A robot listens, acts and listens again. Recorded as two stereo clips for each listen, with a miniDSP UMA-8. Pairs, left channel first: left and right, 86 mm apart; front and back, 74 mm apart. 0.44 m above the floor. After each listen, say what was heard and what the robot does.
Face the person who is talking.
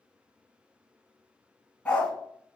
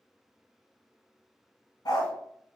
Keep listening.
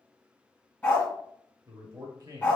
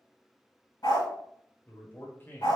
The man speaking: 55° right. Turn 55° right.
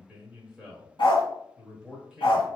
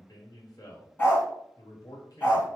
The man speaking is now 10° right. Turn 10° right.
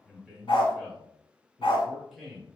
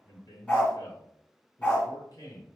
Found it: a man speaking, straight ahead.